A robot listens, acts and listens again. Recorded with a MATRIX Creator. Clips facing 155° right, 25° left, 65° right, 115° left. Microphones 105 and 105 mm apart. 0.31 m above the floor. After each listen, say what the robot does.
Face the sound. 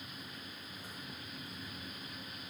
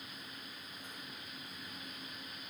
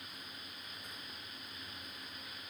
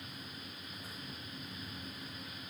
Keep listening.
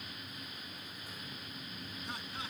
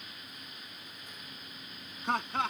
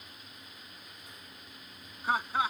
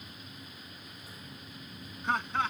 Turn 15° left.
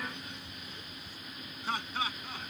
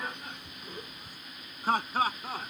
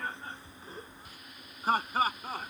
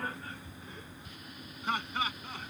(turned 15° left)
Turn 20° right.
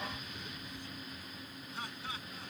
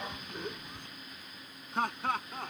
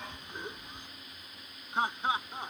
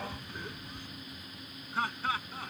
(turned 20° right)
Facing the laughter.